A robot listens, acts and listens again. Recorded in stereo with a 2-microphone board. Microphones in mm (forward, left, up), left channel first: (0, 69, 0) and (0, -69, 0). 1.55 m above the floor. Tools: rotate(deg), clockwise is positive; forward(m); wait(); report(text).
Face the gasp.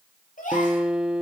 rotate(-75)
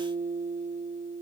wait()
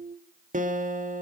report("I heard a gasp, but can't make it out now. It was about straight ahead or 30° left.")